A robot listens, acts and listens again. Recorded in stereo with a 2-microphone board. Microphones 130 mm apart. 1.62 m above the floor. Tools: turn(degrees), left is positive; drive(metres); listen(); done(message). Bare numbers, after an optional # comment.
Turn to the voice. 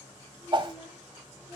# The child speaking: about 25° right or 155° right.
turn(-25)
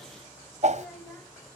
done("Found it: a child speaking, straight ahead.")